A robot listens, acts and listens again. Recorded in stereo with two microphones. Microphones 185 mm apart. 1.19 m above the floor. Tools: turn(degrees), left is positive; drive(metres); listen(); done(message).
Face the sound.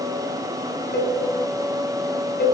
turn(degrees=65)
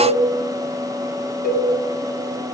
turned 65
turn(degrees=50)
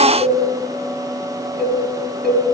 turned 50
done("Facing the cowbell, over 4 m away.")